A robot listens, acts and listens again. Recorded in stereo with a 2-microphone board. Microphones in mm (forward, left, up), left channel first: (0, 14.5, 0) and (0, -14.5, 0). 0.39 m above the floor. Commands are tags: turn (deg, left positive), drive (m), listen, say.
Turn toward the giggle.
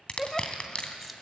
<turn deg="30"/>
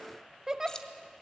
<turn deg="-20"/>
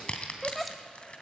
<say>Found it: a giggle, straight ahead, 1 to 2 m away.</say>